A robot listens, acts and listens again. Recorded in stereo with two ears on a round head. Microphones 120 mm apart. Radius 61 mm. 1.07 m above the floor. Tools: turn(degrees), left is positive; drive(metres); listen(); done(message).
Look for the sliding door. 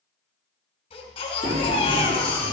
turn(degrees=-45)
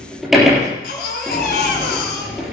done("Found it: a sliding door, straight ahead, over 4 m away.")